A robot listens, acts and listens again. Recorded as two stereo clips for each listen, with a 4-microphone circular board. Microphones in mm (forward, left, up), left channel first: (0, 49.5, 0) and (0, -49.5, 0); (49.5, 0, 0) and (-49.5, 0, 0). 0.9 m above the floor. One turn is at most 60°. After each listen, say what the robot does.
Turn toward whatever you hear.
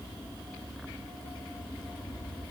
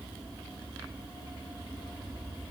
Keep listening.
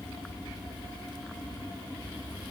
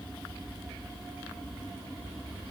Keep listening.
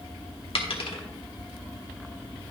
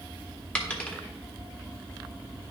Turn 60° left.
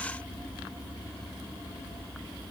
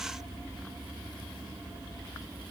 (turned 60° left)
Turn 15° left.
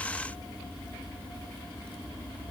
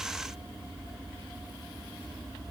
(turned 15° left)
I heard a dropped coin from this way, but can't make it out now.